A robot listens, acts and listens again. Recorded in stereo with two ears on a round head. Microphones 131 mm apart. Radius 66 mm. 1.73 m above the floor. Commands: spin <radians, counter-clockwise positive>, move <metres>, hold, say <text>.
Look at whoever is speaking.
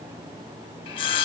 hold
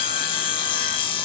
hold
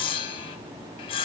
say I can't make out anyone speaking, only sawing.